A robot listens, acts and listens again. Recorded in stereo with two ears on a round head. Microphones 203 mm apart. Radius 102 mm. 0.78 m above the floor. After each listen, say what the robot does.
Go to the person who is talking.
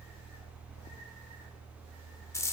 Keep listening.
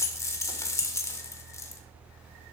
Keep listening.
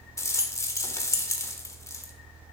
I can't make out anyone speaking to turn to.